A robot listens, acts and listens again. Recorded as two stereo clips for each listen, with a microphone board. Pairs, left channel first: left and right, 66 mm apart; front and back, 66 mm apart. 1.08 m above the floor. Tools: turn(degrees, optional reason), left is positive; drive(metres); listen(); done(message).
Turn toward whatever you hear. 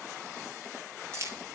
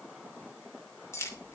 turn(degrees=-45, reason="The keys jangling: 45° right.")
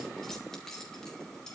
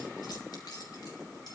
turn(degrees=10, reason="The keys jangling is now 10° left.")
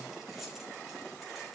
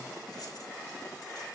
listen()
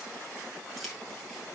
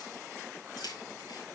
done("Facing the keys jangling.")